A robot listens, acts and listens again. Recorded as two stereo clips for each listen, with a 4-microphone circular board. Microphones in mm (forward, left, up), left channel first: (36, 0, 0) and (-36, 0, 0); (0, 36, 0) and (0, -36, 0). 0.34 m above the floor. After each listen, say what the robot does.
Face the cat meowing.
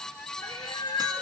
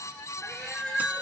Found it: a cat meowing, straight ahead.